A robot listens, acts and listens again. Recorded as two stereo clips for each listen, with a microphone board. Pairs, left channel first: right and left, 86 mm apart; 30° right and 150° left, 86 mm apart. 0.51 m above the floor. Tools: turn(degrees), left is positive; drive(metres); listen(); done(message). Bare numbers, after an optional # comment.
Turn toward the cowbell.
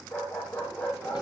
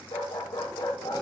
listen()
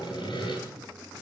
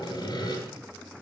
listen()
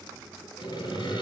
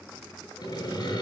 done("I can't make out a cowbell, only a dog barking and sawing.")